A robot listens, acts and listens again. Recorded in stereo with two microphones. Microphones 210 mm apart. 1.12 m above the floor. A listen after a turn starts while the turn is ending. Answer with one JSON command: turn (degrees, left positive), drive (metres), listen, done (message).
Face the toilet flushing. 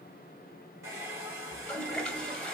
{"turn": 30}
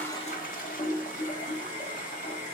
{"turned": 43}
{"turn": 135}
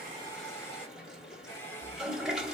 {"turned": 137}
{"done": "Facing the toilet flushing."}